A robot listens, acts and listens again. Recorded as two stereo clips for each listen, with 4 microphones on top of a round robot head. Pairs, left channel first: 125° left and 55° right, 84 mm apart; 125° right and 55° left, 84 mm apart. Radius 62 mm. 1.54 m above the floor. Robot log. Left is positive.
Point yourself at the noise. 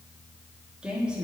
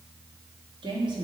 note: The woman speaking: 25° left.
cmd yaw +25
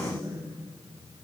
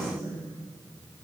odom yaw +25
end: Facing the woman speaking, 2 to 4 m away.